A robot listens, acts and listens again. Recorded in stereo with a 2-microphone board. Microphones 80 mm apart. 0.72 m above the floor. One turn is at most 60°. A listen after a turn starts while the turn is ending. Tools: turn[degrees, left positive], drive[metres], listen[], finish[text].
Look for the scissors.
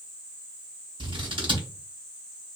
Action: turn[-60]
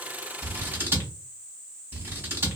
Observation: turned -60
Thought: So it is at 25° right.
Action: turn[-25]
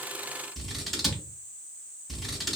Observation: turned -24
Action: finish[Facing the scissors.]